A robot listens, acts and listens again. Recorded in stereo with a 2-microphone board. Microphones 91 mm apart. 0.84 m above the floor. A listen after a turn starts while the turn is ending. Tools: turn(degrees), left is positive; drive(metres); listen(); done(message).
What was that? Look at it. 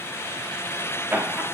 turn(degrees=-20)
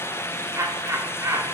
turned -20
turn(degrees=-30)
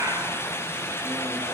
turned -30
listen()
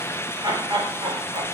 turn(degrees=-120)
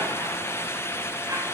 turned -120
listen()
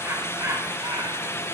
turn(degrees=-35)
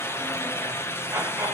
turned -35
turn(degrees=-20)
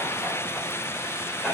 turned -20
done("Facing the laughter.")